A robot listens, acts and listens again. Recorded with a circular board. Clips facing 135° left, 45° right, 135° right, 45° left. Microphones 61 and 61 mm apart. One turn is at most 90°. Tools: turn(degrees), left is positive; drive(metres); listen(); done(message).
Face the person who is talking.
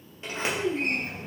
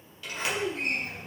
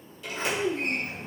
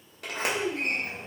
turn(degrees=30)
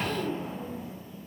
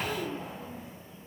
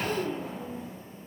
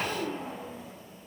turn(degrees=25)
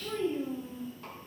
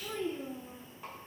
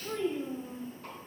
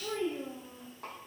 turn(degrees=30)
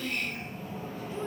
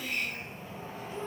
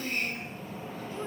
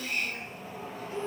turn(degrees=25)
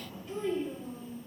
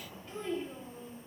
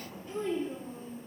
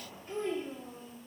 done("Facing the child speaking.")